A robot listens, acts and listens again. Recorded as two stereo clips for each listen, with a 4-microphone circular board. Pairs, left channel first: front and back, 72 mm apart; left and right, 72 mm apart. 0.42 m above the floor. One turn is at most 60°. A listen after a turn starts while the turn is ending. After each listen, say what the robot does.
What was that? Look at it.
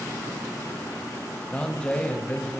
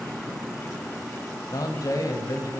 Turn 60° left.
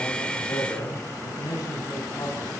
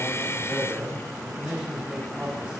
Turn 10° right.
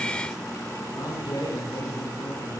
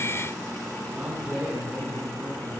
Turn 15° right.
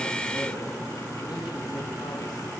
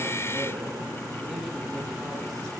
Keep listening.
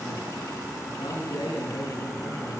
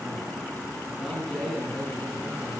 Facing the man speaking.